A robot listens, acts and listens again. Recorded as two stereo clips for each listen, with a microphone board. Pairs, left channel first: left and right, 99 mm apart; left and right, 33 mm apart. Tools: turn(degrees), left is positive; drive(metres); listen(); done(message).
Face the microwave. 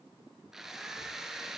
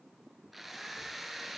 listen()
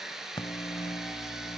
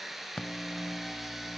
turn(degrees=55)
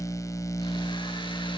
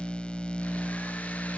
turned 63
turn(degrees=40)
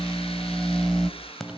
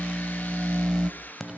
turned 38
done("Facing the microwave.")